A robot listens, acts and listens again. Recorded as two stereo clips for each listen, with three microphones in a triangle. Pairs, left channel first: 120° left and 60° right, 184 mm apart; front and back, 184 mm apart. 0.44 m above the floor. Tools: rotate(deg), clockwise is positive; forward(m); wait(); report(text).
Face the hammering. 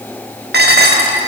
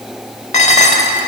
wait()
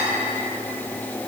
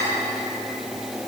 wait()
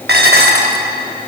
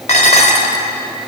report("I can't make out hammering to turn to.")